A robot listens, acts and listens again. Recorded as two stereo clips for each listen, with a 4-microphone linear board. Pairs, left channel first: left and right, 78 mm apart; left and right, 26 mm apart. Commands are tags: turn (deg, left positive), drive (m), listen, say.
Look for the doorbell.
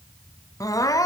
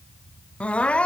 <listen/>
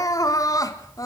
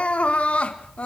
<listen/>
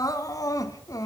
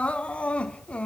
<say>I can't make out a doorbell, only crying.</say>